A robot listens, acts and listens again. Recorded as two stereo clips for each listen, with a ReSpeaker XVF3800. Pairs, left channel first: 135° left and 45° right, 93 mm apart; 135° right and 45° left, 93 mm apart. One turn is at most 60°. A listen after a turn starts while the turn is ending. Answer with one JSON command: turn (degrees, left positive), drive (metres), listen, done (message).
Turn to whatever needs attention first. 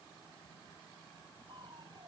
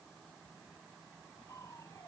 {"listen": true}
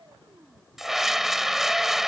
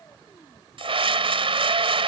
{"turn": 40}
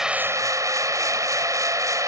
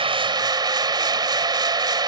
{"done": "Found it: a scream, straight ahead."}